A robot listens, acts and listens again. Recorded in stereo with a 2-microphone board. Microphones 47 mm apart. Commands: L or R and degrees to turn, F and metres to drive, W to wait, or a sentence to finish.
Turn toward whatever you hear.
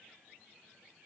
W
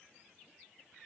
W
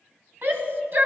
R45
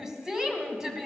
R15
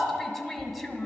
Facing the shout.